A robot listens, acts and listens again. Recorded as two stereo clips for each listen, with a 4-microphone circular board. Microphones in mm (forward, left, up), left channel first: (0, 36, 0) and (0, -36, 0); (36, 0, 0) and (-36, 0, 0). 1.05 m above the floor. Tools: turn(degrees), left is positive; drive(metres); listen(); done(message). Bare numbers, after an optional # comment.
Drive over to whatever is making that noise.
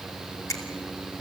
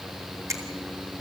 # The finger snap: 135° left.
turn(135)
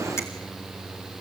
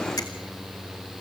listen()
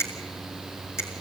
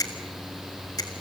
# The finger snap is now 35° left.
turn(35)
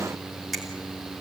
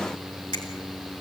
drive(1.0)
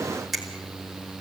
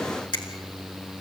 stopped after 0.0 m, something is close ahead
done("Blocked. The finger snap is further on, straight ahead.")